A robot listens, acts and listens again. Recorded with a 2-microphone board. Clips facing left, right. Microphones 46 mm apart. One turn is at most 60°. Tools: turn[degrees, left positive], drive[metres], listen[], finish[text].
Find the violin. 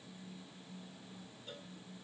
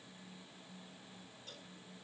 Action: listen[]
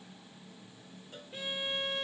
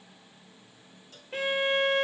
Action: turn[-60]
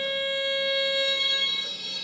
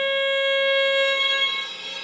Thought: So it is at 45° right.
Action: turn[-45]
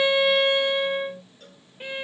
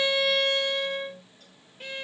Thought: The violin is now 15° left.
Action: turn[15]
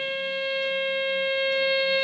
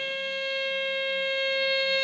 Action: finish[Facing the violin.]